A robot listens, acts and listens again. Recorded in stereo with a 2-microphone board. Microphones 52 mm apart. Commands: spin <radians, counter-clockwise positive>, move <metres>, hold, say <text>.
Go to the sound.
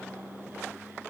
hold
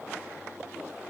hold
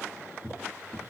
spin 0.52
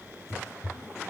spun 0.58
spin 2.01
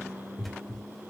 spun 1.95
move 1.0
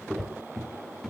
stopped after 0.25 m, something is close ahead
say Blocked. The cupboard door is further on, straight ahead.